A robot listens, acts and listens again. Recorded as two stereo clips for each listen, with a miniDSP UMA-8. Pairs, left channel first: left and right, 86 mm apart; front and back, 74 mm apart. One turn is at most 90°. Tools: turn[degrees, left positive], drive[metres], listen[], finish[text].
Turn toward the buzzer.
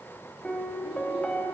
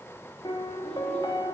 Action: listen[]
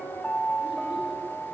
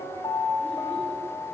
Action: listen[]
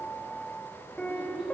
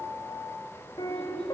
Action: finish[I can't make out a buzzer to turn to.]